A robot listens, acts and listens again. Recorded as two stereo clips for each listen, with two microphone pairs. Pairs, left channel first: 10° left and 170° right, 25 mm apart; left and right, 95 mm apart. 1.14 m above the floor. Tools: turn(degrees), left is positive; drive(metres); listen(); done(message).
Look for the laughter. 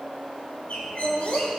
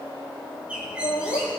turn(degrees=65)
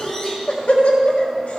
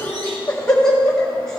turn(degrees=15)
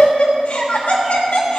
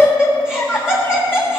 done("Found it: laughter, straight ahead.")